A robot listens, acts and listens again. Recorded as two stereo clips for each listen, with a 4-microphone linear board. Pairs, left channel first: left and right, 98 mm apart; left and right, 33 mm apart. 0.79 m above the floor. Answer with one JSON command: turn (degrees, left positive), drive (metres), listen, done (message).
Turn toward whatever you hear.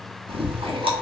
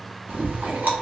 {"turn": -65}
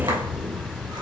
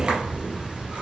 {"turn": -45}
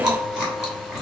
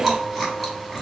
{"done": "Facing the chewing, under 1 m away."}